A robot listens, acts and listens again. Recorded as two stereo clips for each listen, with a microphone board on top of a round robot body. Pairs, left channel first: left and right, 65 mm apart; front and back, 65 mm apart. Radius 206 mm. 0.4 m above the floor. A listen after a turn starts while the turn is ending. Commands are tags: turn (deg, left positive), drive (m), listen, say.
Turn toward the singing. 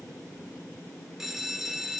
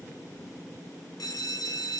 <listen/>
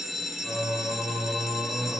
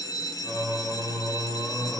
<turn deg="50"/>
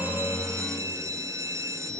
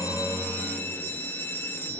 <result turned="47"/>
<say>Facing the singing.</say>